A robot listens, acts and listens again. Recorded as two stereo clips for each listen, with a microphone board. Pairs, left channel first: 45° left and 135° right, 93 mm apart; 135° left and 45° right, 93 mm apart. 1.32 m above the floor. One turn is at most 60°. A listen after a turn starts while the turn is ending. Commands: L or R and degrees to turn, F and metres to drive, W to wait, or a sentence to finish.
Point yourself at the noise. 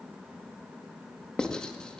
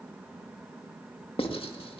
L60
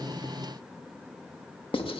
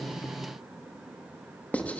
L60
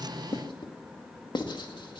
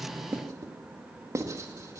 L10
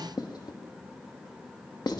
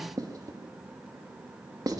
Found it: writing, straight ahead, 2 to 4 m away.